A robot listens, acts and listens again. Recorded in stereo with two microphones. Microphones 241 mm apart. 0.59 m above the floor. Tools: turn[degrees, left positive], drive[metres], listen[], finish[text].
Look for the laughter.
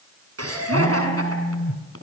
Action: turn[-90]
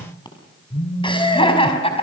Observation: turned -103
Thought: So it is at 25° left.
Action: turn[25]
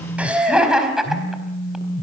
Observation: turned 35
Action: finish[Facing the laughter, over 4 m away.]